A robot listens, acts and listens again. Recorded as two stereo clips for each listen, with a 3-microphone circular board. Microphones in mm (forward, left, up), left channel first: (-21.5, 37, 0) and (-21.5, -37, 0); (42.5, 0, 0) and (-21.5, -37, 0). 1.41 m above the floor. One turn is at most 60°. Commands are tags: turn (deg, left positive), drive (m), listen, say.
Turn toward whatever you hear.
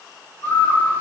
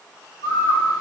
<turn deg="35"/>
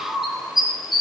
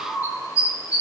<say>Found it: a bird, straight ahead, 2 to 4 m away.</say>